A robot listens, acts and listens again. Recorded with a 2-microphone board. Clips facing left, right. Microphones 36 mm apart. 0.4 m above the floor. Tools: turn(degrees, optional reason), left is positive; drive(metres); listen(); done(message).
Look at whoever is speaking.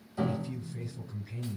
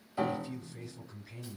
turn(degrees=30)
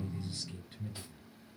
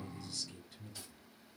turn(degrees=140, reason="So it is at 140° left.")
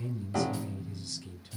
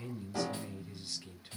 turn(degrees=-25, reason="The man speaking is now 25° right.")
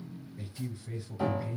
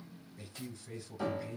done("Facing the man speaking, 1 to 2 m away.")